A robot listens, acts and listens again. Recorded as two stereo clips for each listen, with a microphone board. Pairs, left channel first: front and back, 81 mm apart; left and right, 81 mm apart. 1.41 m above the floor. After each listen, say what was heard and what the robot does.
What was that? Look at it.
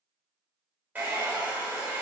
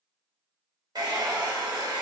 The hair dryer: 110° right. Turn 110° right.
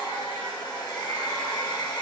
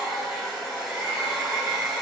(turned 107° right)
Facing the hair dryer, under 1 m away.